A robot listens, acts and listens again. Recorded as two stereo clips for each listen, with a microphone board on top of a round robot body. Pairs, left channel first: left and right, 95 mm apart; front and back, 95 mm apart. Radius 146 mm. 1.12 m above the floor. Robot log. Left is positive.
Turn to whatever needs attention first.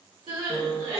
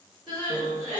note: The crying: 50° right.
cmd yaw -50
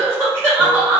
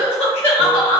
note: The crying is now 20° right.
cmd yaw -20
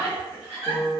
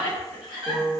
end: Facing the crying.